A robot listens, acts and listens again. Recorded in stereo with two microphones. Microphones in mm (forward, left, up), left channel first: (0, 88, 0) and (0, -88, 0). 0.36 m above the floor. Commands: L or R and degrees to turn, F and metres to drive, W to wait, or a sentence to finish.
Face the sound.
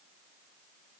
W
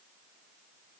W
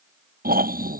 R55
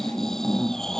Found it: snoring, straight ahead.